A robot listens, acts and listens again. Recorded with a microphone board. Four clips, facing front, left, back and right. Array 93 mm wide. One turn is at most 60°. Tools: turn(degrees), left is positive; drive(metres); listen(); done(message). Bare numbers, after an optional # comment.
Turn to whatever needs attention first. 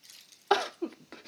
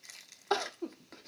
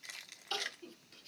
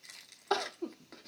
done("Found it: crying, straight ahead.")